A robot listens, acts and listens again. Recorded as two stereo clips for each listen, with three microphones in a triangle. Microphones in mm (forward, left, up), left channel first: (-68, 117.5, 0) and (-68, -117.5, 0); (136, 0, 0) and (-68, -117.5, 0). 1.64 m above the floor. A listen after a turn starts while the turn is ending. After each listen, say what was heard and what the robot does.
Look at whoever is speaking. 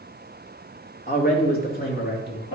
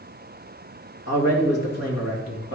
The man speaking: 40° left. Turn 40° left.
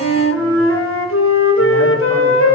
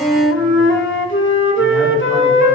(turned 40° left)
Keep listening.
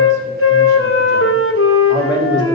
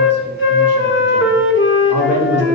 The man speaking is now 20° left. Turn 20° left.
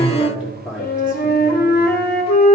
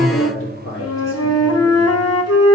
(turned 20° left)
Found it: a man speaking, straight ahead, over 4 m away.